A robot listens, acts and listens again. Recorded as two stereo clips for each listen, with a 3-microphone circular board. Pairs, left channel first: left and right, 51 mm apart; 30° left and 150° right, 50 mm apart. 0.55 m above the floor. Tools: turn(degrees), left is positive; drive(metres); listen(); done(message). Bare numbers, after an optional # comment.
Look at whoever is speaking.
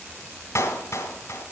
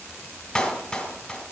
listen()
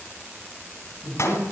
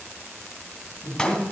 # The man speaking: 20° right.
turn(-20)
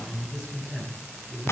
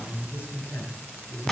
done("Facing the man speaking.")